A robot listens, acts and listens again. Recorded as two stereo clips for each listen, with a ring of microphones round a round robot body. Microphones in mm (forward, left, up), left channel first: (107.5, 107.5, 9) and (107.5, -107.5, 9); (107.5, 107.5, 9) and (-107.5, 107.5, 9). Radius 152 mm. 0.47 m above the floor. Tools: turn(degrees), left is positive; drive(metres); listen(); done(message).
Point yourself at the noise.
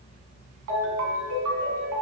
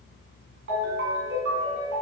turn(degrees=-125)
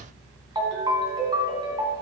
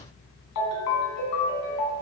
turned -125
turn(degrees=-20)
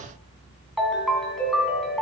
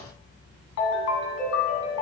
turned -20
done("Found it: a ringtone, straight ahead.")